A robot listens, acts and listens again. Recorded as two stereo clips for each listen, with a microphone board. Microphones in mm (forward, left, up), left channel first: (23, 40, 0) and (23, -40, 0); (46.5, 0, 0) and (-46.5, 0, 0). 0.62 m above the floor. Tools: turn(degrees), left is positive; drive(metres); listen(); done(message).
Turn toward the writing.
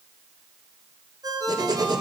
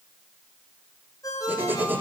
turn(degrees=-115)
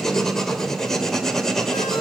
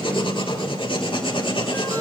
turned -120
done("Found it: writing, straight ahead.")